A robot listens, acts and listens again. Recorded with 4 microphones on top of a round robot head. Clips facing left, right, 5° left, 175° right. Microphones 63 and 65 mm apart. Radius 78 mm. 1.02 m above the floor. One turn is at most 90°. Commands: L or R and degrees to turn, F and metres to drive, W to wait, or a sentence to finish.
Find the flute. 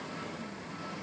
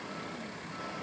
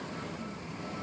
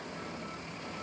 W
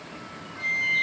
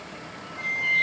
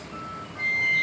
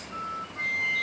L35
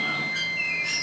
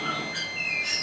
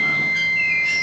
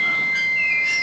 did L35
Facing the flute.